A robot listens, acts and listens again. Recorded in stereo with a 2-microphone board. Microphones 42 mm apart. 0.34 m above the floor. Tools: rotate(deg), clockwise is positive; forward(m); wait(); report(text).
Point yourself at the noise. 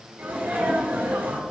rotate(60)
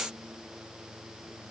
wait()
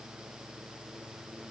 report("I heard a sneeze, but can't make it out now. It was about straight ahead or 60° right.")